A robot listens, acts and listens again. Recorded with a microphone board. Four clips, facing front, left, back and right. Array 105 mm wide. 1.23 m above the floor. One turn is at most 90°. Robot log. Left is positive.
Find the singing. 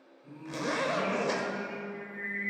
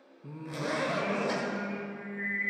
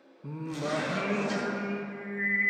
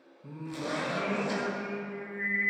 note: The singing: 150° right.
cmd yaw -90
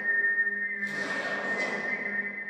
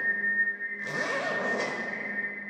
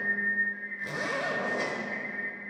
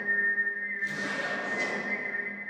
note: The singing is now 30° right.
cmd yaw -30
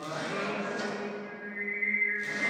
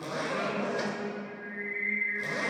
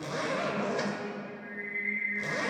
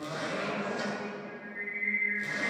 end: Found it: singing, straight ahead.